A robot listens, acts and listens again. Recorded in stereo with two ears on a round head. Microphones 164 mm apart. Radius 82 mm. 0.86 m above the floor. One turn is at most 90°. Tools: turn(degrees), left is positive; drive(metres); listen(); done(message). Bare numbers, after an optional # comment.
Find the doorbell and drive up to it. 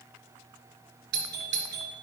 # The doorbell: about 60° right or 120° right.
turn(-60)
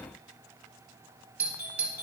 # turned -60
# So it is at 10° right.
turn(-10)
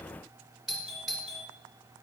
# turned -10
drive(1.0)
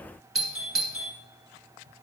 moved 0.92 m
drive(1.0)
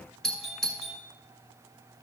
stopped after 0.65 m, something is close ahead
done("Arrived at the doorbell, straight ahead.")